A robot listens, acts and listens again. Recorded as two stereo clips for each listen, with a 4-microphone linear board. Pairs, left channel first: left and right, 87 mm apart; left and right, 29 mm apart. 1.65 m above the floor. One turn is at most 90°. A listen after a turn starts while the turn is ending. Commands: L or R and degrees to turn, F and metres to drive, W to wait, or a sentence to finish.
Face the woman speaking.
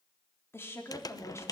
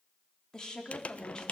L35
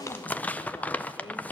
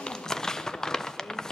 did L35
W
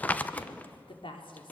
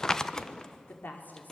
L90
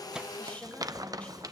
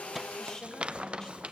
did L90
L15
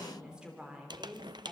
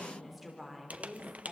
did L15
R10
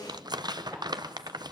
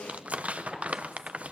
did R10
W
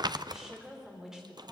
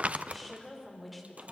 Facing the woman speaking.